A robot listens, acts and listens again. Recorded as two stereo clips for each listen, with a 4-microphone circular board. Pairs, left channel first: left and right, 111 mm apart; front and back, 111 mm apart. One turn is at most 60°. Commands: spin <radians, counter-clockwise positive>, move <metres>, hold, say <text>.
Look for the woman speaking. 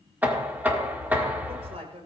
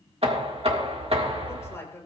spin -1.05
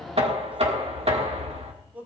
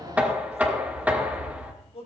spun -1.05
spin -0.26
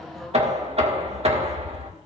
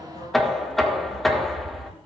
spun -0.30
hold
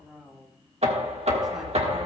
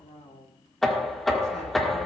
say Found it: a woman speaking, straight ahead.